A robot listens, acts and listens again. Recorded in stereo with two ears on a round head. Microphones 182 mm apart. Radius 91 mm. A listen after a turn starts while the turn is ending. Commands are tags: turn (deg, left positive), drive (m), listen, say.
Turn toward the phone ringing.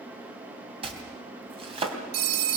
<turn deg="-50"/>
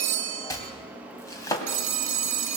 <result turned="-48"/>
<turn deg="-80"/>
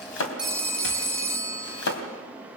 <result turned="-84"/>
<say>Found it: a phone ringing, straight ahead.</say>